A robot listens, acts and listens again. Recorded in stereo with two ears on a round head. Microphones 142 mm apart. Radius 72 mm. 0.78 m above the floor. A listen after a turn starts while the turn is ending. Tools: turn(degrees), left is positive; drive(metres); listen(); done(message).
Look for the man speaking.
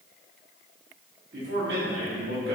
turn(degrees=-65)
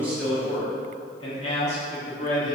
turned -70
turn(degrees=50)
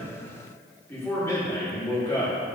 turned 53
turn(degrees=15)
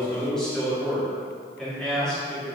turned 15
done("Found it: a man speaking, straight ahead.")